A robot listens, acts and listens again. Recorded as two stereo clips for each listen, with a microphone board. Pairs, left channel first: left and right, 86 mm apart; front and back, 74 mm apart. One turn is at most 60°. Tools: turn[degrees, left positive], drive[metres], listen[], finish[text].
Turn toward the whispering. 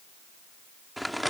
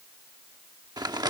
Action: listen[]
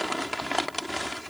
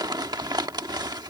Action: listen[]
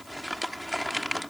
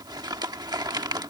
Action: finish[I can't make out whispering to turn to.]